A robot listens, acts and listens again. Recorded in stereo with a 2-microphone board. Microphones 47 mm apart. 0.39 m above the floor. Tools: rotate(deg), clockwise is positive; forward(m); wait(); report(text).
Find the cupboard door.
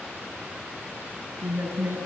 wait()
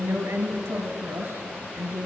wait()
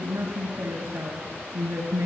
report("I can't make out a cupboard door, only a woman speaking.")